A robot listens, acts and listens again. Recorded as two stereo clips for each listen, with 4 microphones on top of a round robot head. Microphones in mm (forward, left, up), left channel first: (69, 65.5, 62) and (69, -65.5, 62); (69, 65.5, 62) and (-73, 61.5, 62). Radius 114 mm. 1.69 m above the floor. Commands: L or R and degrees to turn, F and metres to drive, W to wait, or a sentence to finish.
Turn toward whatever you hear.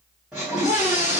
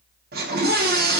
R175
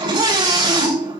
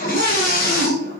R40
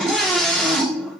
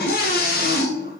Facing the scream, 2 to 4 m away.